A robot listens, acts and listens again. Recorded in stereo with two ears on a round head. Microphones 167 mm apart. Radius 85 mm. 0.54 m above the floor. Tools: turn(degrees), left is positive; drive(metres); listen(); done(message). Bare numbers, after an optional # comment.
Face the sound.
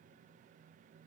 listen()
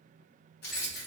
# The keys jangling: about 60° left or 120° left.
turn(60)
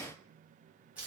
# So it is at 10° right.
turn(-10)
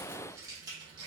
# The keys jangling is now 25° right.
turn(-25)
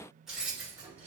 # The keys jangling is now 10° right.
turn(-10)
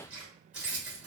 done("Found it: keys jangling, straight ahead, 1 to 2 m away.")